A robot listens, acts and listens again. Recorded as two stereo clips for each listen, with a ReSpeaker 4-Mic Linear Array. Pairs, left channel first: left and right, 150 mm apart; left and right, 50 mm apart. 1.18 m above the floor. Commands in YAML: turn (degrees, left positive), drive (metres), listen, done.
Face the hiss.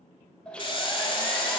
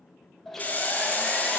turn: 35
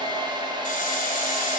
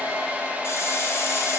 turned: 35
listen: true
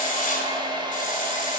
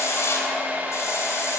turn: 105
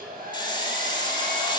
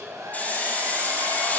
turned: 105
turn: 35
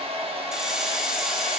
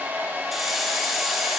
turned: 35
done: "Facing the hiss, 1 to 2 m away."